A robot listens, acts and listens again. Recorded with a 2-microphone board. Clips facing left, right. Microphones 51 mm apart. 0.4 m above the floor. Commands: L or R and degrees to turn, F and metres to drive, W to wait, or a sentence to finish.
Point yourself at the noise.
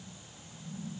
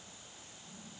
W
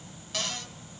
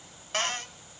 R40
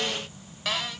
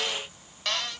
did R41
Facing the cupboard door.